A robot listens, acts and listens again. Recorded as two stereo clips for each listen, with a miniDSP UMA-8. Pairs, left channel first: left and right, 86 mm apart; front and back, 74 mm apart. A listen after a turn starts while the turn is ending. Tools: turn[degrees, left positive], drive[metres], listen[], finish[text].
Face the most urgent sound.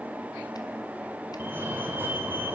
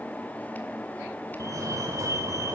Thought: The fire alarm: 150° right.
Action: turn[-150]
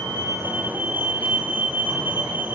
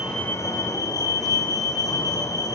Thought: The fire alarm is now 25° right.
Action: turn[-25]
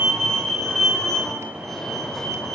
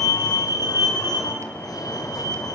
Action: finish[Facing the fire alarm, 2 to 4 m away.]